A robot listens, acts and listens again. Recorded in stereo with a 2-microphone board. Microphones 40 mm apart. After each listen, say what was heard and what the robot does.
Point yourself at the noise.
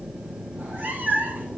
The cat meowing: about 50° right or 130° right. Turn 50° right.
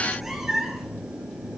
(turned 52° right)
So it is at 10° right. Turn 10° right.
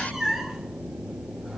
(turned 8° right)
Facing the cat meowing.